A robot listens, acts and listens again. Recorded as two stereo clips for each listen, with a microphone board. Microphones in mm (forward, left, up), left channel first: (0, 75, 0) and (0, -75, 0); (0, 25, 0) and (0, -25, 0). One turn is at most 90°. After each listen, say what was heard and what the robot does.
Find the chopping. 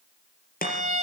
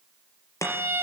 Turn 90° left.
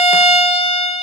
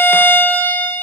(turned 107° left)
Nothing new. It was at 15° right. Turn 15° right.
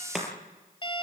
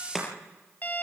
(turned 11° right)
Found it: chopping, straight ahead.